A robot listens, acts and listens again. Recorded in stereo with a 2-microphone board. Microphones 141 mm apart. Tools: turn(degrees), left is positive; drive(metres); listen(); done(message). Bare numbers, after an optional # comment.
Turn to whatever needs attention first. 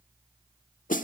listen()
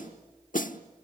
listen()
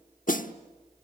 done("I can't make out anything urgent, only a snare drum.")